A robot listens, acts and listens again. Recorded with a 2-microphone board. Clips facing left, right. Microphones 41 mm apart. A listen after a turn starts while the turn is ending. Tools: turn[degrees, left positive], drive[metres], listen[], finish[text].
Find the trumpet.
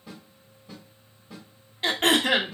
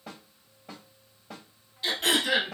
Action: listen[]
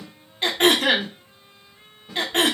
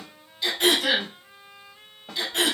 Thought: The trumpet: about 50° right or 130° right.
Action: turn[-50]
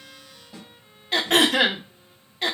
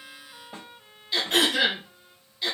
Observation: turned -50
Thought: So it is at 80° right.
Action: turn[-80]
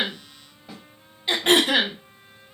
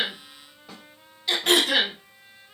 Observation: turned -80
Thought: The trumpet is now 30° right.
Action: turn[-30]
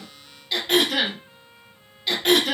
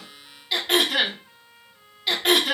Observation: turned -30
Action: finish[Facing the trumpet.]